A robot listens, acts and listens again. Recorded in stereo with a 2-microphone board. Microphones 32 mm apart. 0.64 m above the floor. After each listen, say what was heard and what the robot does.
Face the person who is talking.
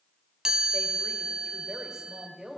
Turn 30° right.
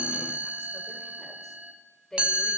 So it is at 20° left. Turn 20° left.
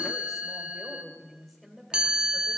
Facing the woman speaking, 1 to 2 m away.